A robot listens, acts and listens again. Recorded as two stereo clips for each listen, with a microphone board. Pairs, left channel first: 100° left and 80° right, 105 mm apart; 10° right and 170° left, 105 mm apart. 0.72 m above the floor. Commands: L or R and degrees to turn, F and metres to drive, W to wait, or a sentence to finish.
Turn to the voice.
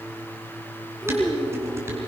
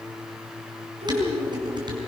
L175
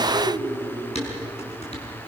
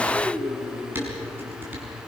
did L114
L60
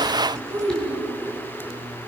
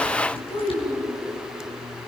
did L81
R20
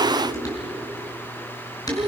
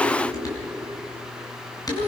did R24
Found it: a child speaking, straight ahead.